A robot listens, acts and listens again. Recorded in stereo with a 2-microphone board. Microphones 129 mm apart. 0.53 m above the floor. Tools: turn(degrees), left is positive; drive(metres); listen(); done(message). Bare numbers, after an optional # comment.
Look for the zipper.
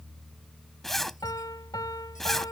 turn(30)
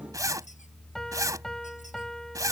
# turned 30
# So it is at 25° right.
turn(-25)
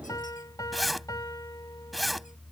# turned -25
done("Found it: a zipper, straight ahead.")